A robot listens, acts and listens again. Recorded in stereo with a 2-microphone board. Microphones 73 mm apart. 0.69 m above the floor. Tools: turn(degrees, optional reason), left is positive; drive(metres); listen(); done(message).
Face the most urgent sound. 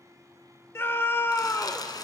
turn(degrees=35, reason="The scream: about 35° left or 145° left.")
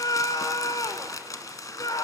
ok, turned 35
turn(degrees=110, reason="So it is at 110° left.")
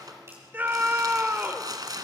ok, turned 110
turn(degrees=-30, reason="The scream is now 30° right.")
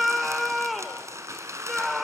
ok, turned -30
done("Found it: a scream, straight ahead.")